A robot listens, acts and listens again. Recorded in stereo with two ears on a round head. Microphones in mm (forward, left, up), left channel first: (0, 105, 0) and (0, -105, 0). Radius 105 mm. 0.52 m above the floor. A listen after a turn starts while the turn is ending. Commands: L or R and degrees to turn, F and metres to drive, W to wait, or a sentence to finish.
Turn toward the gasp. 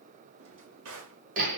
W
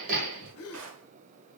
L70
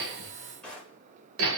W
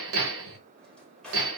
I heard a gasp, but can't make it out now. It was about straight ahead or 40° left.